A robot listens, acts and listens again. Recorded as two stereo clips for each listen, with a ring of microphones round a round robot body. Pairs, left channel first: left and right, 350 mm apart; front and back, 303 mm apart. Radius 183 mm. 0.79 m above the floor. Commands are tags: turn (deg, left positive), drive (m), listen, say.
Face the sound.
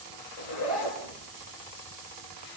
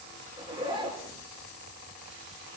<turn deg="105"/>
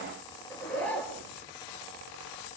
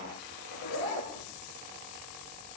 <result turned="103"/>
<say>Facing the zipper.</say>